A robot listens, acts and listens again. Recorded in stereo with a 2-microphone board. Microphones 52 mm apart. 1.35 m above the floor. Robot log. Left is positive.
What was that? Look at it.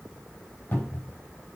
note: The cupboard door: about 40° left or 140° left.
cmd yaw +40
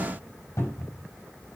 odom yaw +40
note: So it is at 100° left.
cmd yaw +100
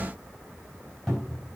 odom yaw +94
note: The cupboard door is now 10° left.
cmd yaw +10
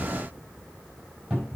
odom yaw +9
end: Found it: a cupboard door, straight ahead.